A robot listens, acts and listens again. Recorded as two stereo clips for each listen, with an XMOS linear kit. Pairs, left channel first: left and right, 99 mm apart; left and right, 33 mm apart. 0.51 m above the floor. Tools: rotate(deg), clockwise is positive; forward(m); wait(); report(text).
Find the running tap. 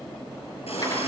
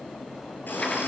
rotate(-90)
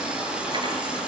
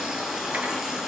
rotate(10)
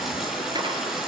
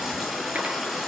report("Found it: a running tap, straight ahead, over 4 m away.")